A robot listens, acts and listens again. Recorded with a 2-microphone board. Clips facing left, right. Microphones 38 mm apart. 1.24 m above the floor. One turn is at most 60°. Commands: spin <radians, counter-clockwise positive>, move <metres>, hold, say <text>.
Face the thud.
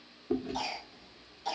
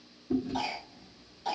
hold
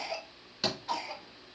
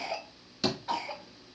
spin 0.26
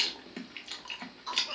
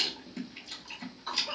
hold
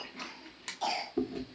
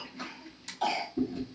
say I heard a thud, but can't make it out now. It was about straight ahead or 150° left.